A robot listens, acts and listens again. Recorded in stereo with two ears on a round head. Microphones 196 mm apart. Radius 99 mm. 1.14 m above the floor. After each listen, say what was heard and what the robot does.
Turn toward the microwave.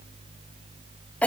Keep listening.
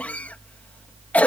Keep listening.
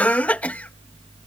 I can't make out a microwave, only a cough.